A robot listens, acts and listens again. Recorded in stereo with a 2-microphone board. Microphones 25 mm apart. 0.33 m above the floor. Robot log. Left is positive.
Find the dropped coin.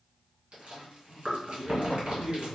cmd idle
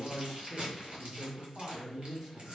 cmd idle
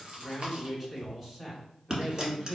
note: The dropped coin: about 30° right or 150° right.
cmd yaw -30
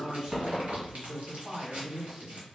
cmd idle
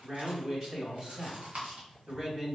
end: I heard a dropped coin, but can't make it out now. It was about straight ahead or 120° right.